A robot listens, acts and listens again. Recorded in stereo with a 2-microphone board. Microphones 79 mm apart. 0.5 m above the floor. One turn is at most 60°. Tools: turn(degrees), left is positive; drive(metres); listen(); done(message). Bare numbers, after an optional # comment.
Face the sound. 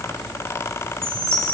# The chime: about 30° right or 150° right.
turn(-30)
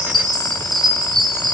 # So it is at 120° right.
turn(-60)
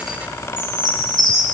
# The chime is now 55° right.
turn(-55)
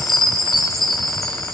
done("Found it: a chime, straight ahead, 2 to 4 m away.")